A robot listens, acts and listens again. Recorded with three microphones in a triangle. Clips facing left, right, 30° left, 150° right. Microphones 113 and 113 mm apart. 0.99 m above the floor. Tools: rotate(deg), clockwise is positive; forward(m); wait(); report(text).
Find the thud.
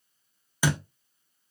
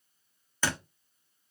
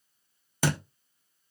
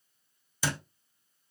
rotate(-10)
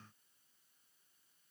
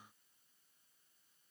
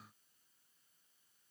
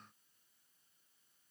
report("Facing where the thud came from. I can't hear it now.")